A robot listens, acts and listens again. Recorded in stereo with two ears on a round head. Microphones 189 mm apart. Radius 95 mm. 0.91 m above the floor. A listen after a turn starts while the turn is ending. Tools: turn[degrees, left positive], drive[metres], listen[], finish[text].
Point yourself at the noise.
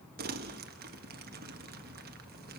Thought: The crumpling: about 45° right or 135° right.
Action: turn[-45]
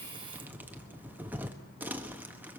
Thought: So it is at 10° right.
Action: turn[-10]
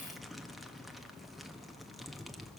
Action: finish[Facing the crumpling, 1 to 2 m away.]